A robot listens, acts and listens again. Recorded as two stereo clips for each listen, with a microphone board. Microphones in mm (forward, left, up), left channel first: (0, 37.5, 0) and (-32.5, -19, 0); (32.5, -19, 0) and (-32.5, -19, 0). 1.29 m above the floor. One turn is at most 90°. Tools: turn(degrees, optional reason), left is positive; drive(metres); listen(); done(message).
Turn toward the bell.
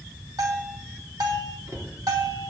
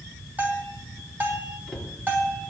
turn(degrees=-90, reason="The bell: 120° right.")
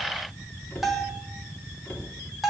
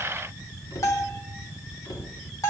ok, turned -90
turn(degrees=-35, reason="The bell is now 35° right.")
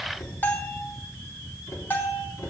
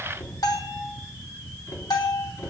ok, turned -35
done("Facing the bell, 2 to 4 m away.")